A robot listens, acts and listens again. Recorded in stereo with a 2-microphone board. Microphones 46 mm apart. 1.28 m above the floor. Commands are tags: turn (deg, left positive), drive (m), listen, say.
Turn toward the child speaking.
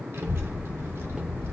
<turn deg="-75"/>
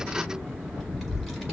<say>Found it: a child speaking, straight ahead.</say>